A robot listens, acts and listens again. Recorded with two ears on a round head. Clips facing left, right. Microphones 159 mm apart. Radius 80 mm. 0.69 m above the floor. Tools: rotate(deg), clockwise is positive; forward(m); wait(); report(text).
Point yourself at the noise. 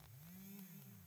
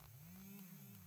wait()
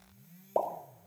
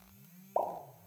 rotate(-45)
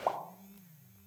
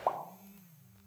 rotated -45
report("Facing the pop, 2 to 4 m away.")